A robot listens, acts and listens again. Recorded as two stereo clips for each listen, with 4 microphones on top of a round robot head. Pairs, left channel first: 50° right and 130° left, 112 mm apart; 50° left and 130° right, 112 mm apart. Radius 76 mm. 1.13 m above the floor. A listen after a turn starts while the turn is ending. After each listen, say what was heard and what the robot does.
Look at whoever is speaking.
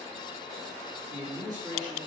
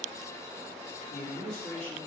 The man speaking: 70° left. Turn 70° left.
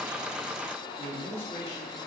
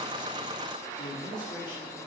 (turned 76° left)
Found it: a man speaking, straight ahead.